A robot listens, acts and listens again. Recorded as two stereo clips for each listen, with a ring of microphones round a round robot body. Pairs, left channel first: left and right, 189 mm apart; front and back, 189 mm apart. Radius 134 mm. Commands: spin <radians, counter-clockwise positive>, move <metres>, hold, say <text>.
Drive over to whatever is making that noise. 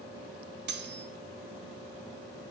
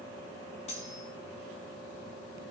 spin -1.13
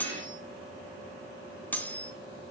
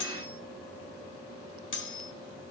spin 0.17
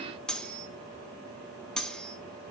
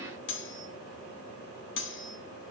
move 1.0
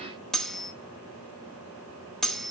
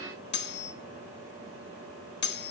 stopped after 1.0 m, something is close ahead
say I am next to the cutlery clinking.